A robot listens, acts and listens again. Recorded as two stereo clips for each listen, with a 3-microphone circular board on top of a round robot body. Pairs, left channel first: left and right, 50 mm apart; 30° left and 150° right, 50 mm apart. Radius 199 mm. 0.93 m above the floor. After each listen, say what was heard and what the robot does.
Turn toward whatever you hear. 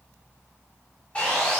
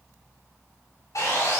The sawing: 25° left. Turn 25° left.
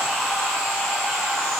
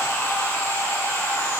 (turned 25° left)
Found it: sawing, straight ahead.